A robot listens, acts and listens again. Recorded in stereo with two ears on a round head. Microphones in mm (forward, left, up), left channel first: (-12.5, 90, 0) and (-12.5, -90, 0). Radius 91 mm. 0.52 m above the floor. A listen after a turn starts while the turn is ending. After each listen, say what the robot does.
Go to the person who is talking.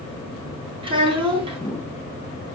Turn 30° right.
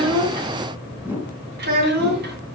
Turn 125° right.
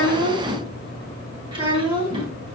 Turn 25° right.
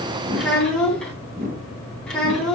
Drive 1.0 m forward.
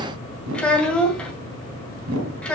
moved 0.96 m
Drive 1.0 m forward.
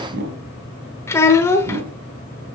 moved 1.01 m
Turn 15° left.
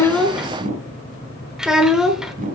Drive 1.0 m forward.
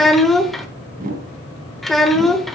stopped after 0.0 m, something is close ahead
Arrived at the child speaking, straight ahead.